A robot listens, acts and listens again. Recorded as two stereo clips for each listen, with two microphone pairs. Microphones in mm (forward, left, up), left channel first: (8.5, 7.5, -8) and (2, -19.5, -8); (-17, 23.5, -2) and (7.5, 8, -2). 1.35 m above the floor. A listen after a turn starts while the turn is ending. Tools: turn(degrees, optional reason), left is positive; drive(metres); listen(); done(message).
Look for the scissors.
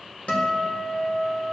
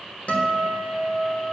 listen()
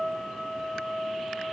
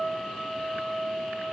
listen()
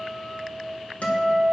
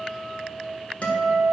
done("I can't make out scissors, only a guitar.")